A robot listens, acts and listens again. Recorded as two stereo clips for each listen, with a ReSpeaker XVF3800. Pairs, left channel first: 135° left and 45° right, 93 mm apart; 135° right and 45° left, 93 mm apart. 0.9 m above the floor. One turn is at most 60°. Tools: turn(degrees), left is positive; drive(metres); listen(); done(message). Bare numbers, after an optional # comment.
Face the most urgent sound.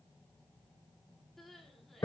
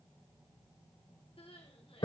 # The crying: 135° right.
turn(-60)
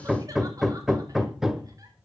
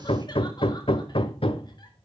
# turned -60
# Nothing new. It was at 75° right.
turn(-60)
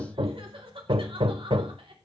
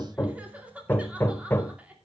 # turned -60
# The crying is now 30° right.
turn(-30)
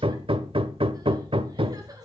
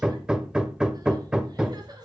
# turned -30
listen()
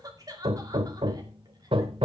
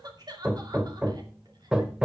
done("Found it: crying, straight ahead.")